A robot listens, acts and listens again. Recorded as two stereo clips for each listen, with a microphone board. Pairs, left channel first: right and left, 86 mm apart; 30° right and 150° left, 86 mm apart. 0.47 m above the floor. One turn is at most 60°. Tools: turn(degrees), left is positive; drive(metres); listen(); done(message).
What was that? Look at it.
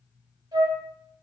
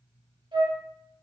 turn(degrees=60)
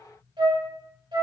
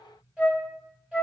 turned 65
turn(degrees=60)
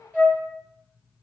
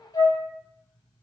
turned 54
turn(degrees=20)
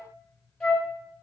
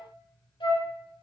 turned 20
done("Facing the flute.")